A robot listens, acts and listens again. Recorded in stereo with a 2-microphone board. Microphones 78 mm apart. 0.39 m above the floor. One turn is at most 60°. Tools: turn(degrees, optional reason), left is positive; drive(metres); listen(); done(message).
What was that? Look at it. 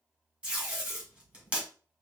turn(degrees=-15, reason="The tape being pulled: about 15° right or 165° right.")
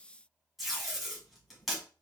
done("Facing the tape being pulled, 2 to 4 m away.")